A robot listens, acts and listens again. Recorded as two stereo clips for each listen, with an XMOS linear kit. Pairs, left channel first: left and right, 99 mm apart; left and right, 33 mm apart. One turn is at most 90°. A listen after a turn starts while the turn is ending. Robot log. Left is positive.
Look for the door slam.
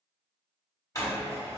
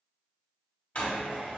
note: The door slam: about 35° left or 145° left.
cmd yaw +35
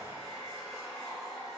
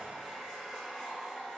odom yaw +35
cmd idle
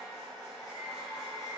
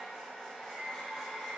end: I heard a door slam, but can't make it out now. It was about straight ahead or 110° left.